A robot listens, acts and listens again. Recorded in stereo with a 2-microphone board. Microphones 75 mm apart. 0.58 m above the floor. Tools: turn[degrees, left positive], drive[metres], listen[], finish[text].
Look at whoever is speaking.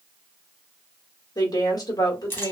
Thought: The woman speaking: about 50° left or 130° left.
Action: turn[50]
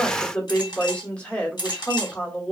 Thought: So it is at 15° left.
Action: turn[15]
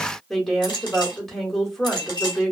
Action: finish[Found it: a woman speaking, straight ahead, 1 to 2 m away.]